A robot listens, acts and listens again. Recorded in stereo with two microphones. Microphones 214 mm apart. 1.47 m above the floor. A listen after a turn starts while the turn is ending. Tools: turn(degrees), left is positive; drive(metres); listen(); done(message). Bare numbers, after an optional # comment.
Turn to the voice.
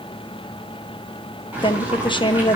# The woman speaking: about 25° left or 155° left.
turn(25)
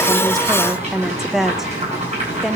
done("Facing the woman speaking, under 1 m away.")